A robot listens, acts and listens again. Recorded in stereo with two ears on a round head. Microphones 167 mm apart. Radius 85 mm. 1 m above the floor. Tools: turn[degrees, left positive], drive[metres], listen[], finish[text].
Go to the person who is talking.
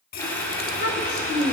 Thought: The child speaking: about 50° left or 130° left.
Action: turn[50]
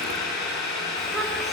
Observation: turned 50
Action: drive[1.0]
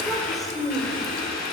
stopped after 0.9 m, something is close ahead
Action: finish[Blocked. The child speaking is further on, straight ahead.]